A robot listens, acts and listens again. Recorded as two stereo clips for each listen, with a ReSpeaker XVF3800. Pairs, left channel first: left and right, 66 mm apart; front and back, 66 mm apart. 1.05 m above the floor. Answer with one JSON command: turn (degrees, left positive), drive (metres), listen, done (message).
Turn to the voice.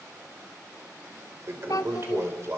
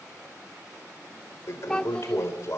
{"turn": 80}
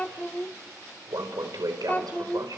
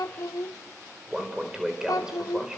{"turn": 20}
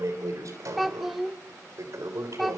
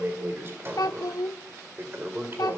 {"done": "Found it: a child speaking, straight ahead, 1 to 2 m away."}